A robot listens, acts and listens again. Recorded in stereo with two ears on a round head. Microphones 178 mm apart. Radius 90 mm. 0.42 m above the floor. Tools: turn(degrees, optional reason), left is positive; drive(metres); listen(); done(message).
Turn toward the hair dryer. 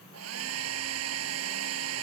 turn(degrees=-90)
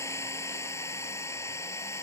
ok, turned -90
turn(degrees=15, reason="So it is at 15° left.")
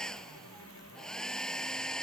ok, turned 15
done("Found it: a hair dryer, straight ahead.")